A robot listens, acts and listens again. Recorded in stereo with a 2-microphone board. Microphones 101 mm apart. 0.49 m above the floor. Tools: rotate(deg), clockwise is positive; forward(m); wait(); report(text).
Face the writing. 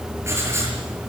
rotate(25)
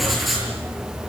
report("Found it: writing, straight ahead, over 4 m away.")